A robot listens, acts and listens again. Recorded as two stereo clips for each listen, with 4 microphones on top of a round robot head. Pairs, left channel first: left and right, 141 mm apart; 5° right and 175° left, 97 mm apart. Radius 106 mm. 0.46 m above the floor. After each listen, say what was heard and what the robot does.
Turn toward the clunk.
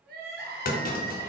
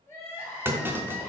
The clunk: 105° left. Turn 105° left.
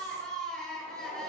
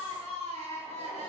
I heard a clunk from this way, but can't make it out now.